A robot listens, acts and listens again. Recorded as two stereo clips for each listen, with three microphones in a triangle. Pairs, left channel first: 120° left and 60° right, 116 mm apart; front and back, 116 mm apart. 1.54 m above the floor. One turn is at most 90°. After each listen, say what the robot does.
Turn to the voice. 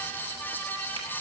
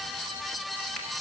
Keep listening.
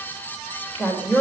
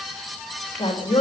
Turn 45° left.
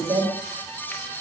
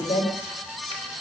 Found it: a woman speaking, straight ahead.